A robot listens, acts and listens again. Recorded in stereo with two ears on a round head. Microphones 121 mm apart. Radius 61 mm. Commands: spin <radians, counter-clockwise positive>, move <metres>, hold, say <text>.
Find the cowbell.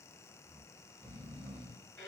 hold
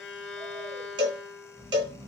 spin -0.70
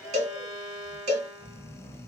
spin -1.57
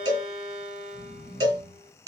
spin -0.61
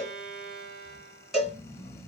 say Found it: a cowbell, straight ahead, 1 to 2 m away.